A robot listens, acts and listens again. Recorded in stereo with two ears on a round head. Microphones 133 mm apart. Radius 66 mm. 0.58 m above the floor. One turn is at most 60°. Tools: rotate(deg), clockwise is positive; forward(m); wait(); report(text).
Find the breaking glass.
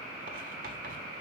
wait()
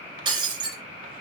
rotate(30)
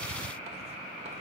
wait()
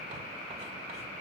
report("I heard breaking glass, but can't make it out now. It was about straight ahead or 120° right.")